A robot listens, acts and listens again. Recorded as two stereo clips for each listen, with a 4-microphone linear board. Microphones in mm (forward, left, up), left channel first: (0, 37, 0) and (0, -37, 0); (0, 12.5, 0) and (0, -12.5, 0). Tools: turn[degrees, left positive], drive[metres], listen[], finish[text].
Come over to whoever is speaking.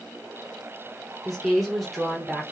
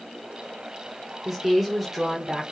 Action: turn[30]
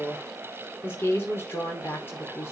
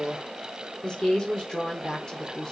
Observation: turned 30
Thought: So it is at 150° left.
Action: turn[150]
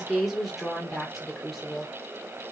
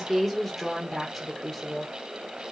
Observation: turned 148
Action: drive[1.0]
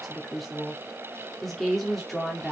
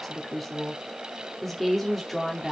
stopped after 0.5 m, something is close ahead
Action: finish[Blocked. The woman speaking is further on, straight ahead.]